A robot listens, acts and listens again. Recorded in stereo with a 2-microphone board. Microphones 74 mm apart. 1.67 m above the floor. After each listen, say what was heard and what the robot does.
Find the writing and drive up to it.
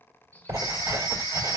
The writing: about 55° right or 125° right. Turn 55° right.
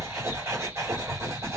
So it is at 45° right. Turn 45° right.
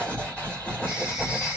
The writing is now 20° left. Turn 20° left.
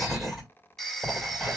Drive 1.0 m forward.
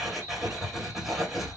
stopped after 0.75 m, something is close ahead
Arrived at the writing, straight ahead.